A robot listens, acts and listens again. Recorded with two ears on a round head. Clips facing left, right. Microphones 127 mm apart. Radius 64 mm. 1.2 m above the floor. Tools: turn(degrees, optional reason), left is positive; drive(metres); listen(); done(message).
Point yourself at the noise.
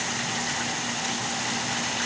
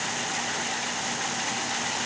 listen()
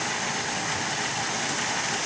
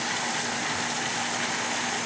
listen()
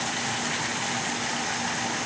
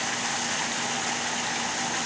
done("I can't make out anything.")